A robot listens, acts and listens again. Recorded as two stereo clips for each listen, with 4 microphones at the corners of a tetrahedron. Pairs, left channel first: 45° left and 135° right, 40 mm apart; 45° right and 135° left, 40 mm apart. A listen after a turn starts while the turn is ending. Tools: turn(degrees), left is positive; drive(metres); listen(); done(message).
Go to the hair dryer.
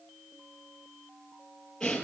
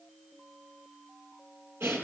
listen()
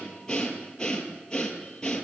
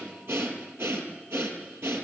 listen()
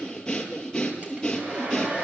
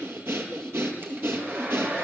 turn(degrees=165)
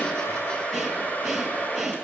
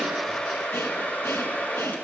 drive(metres=1.0)
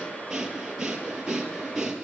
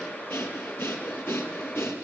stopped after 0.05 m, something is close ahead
turn(degrees=-10)
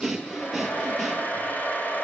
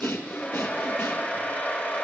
done("Blocked. The hair dryer is further on, straight ahead.")